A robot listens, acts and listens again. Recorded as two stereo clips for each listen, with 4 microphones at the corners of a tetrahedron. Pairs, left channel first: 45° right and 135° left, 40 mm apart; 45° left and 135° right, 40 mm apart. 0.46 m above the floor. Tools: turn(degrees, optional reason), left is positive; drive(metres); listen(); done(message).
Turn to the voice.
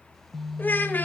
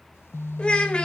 turn(degrees=-15, reason="The child speaking: 15° right.")
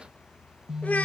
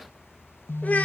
done("Facing the child speaking, 1 to 2 m away.")